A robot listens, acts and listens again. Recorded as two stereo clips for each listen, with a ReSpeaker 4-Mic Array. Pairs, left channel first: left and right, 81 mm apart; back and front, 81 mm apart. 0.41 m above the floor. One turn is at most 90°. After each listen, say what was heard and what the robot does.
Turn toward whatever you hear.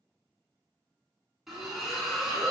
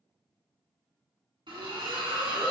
Found it: a splash, straight ahead, 1 to 2 m away.